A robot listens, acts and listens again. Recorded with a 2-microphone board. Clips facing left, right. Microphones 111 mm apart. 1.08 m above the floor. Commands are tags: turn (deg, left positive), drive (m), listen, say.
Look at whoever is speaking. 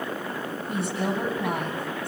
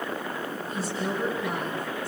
<turn deg="60"/>
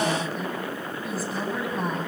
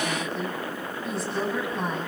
<say>Found it: a woman speaking, straight ahead.</say>